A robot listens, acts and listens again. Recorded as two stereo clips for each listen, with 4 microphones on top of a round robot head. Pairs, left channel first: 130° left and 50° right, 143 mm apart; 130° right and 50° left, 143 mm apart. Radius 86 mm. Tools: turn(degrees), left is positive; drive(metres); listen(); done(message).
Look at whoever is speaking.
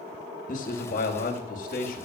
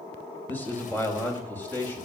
turn(degrees=155)
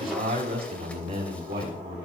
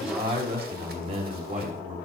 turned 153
done("Found it: a man speaking, straight ahead, over 4 m away.")